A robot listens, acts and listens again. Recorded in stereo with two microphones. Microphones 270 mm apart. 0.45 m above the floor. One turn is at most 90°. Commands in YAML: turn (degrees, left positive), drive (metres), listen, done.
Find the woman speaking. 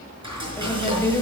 turn: 30
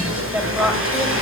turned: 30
done: "Facing the woman speaking, 2 to 4 m away."